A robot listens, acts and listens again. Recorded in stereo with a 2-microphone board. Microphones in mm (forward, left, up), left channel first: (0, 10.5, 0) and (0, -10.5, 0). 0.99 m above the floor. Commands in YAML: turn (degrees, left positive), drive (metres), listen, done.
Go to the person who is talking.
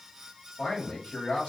turn: 75
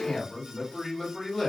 drive: 1.0
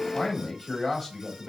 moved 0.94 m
drive: 1.0
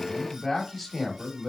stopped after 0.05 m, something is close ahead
turn: -10
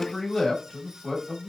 done: "I am next to the man speaking."